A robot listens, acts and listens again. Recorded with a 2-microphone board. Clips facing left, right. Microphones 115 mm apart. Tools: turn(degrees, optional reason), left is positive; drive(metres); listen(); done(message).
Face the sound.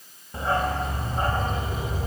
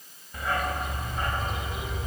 turn(degrees=35, reason="The dog barking: about 35° left or 145° left.")
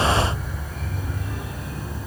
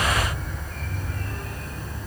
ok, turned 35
turn(degrees=10, reason="So it is at 10° left.")
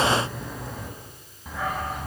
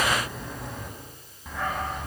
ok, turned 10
done("Found it: a dog barking, straight ahead.")